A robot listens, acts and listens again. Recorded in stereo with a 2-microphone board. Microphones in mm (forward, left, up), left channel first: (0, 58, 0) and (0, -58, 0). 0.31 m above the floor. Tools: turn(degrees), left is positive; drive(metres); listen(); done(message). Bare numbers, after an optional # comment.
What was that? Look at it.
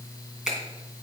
turn(-30)
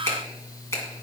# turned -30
# So it is at 25° left.
turn(25)
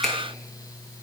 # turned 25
listen()
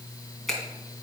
done("Found it: a finger snap, straight ahead, 2 to 4 m away.")